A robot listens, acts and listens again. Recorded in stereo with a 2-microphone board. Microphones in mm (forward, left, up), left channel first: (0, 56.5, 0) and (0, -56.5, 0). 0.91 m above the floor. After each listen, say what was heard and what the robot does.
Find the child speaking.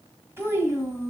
The child speaking: about 20° right or 160° right. Turn 20° right.
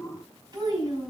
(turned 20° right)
The child speaking: about 35° right or 145° right. Turn 35° right.
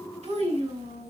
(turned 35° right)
So it is at 110° right. Turn 110° right.
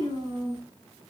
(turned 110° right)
The child speaking is now 45° right. Turn 45° right.
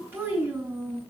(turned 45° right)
The child speaking is now 20° right. Turn 20° right.
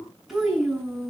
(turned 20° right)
Found it: a child speaking, straight ahead, over 4 m away.